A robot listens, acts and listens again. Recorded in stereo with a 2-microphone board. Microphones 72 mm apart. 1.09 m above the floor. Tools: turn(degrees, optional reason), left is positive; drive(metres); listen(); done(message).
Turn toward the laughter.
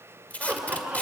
turn(degrees=-20, reason="The laughter: about 20° right or 160° right.")
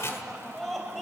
done("Facing the laughter, over 4 m away.")